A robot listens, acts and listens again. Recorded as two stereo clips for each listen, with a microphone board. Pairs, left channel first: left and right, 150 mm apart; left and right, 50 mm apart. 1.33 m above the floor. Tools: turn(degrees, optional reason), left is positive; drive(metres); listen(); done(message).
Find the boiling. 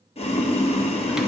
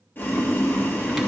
turn(degrees=45, reason="The boiling: about 45° left or 135° left.")
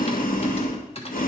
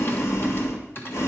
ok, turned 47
turn(degrees=85, reason="So it is at 85° left.")
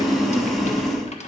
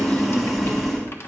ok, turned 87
done("Facing the boiling.")